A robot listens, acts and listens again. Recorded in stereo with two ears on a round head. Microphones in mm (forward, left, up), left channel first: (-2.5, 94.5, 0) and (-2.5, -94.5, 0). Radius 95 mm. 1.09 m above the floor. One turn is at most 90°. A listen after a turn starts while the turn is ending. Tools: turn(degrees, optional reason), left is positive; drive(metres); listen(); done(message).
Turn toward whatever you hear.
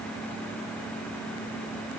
listen()
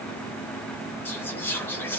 turn(degrees=30)
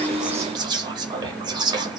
turn(degrees=-20, reason="So it is at 20° right.")
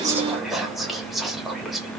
done("Found it: whispering, straight ahead, under 1 m away.")